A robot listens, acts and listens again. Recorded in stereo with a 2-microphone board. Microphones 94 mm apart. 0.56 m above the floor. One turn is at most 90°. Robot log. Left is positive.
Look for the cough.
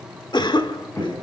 note: The cough: about 50° left or 130° left.
cmd yaw +50
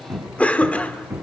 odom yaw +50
note: So it is at 15° left.
cmd yaw +15
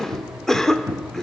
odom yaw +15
end: Found it: a cough, straight ahead, 1 to 2 m away.